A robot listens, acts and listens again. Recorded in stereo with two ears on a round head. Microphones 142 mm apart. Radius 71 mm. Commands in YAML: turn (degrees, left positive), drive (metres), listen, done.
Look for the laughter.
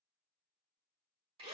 listen: true
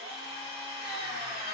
listen: true
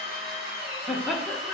turn: 30
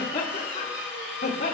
turn: 140
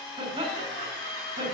turn: -30
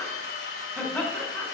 done: "Found it: laughter, straight ahead."